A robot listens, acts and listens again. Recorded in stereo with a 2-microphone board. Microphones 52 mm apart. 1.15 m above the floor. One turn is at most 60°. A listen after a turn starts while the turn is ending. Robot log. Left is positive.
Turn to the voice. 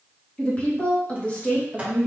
note: The woman speaking: about 30° left or 150° left.
cmd yaw +30
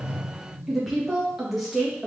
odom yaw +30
end: Facing the woman speaking.